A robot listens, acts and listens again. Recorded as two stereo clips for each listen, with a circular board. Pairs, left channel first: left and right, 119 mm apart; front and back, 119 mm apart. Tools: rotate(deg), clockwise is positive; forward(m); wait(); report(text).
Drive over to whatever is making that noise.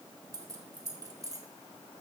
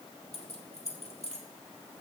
rotate(30)
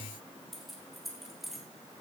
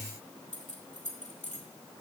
forward(1.0)
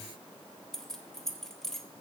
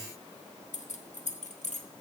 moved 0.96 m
forward(1.0)
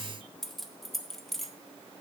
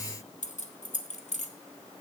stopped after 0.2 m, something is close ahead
report("Arrived at the keys jangling, straight ahead.")